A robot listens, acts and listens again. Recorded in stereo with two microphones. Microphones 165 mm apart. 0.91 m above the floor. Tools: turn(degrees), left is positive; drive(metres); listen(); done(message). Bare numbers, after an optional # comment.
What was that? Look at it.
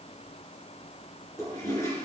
# The toilet flushing: about 20° left or 160° left.
turn(20)
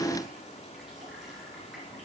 listen()
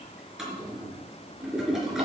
done("Found it: a toilet flushing, straight ahead.")